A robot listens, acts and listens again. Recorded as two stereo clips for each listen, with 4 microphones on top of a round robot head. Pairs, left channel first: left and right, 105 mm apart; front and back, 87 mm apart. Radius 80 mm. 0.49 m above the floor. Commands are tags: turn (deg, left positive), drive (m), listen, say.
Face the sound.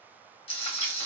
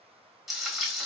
<turn deg="95"/>
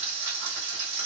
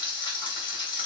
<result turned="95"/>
<turn deg="-20"/>
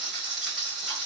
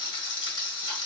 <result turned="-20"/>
<say>Found it: frying, straight ahead.</say>